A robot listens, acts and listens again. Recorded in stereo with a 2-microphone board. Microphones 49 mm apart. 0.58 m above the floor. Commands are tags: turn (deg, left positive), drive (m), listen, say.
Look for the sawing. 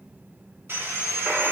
<turn deg="-55"/>
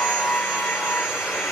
<listen/>
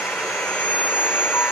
<turn deg="-15"/>
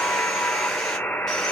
<listen/>
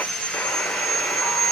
<say>Found it: sawing, straight ahead.</say>